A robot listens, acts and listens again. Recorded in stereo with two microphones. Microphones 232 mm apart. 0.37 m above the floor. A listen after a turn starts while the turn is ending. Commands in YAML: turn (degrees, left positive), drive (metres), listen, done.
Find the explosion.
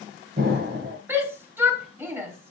turn: -40
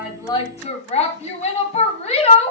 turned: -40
listen: true
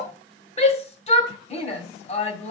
done: "I heard an explosion, but can't make it out now. It was about straight ahead or 100° right."